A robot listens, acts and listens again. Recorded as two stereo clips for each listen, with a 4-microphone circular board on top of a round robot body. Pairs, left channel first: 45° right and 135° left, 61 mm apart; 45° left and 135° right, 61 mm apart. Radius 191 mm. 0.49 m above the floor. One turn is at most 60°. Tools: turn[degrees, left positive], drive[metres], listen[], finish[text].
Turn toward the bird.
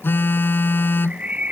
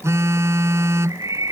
Thought: The bird: 155° right.
Action: turn[-60]
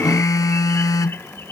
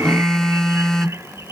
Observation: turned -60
Thought: Nothing new. It was at 95° right.
Action: turn[-60]
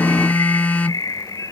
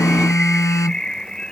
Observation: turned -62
Thought: The bird is now 35° right.
Action: turn[-35]
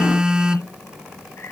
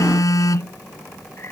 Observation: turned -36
Action: listen[]
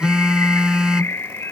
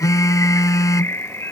Action: finish[Found it: a bird, straight ahead.]